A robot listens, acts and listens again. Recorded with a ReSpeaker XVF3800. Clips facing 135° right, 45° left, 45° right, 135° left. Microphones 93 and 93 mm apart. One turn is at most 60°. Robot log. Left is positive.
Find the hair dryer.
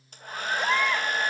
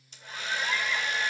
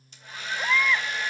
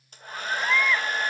note: The hair dryer: straight behind.
cmd yaw +60
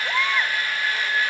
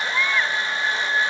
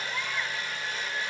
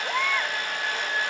note: The hair dryer is now 110° left.
cmd yaw +60
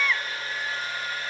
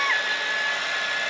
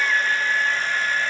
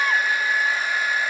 note: The hair dryer is now 55° left.
cmd yaw +55
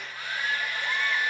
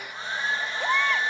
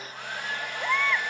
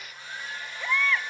note: The hair dryer is now 20° right.
cmd yaw -20
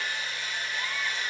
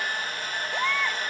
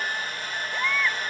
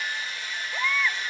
end: Facing the hair dryer.